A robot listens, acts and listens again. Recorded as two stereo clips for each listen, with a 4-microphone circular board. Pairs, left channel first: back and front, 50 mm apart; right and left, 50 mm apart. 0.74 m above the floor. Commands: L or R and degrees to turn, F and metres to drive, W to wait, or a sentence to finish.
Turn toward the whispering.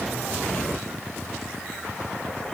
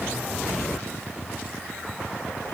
W
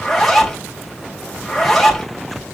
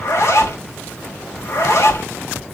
W
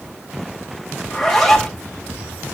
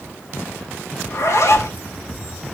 I can't make out whispering, only a zipper.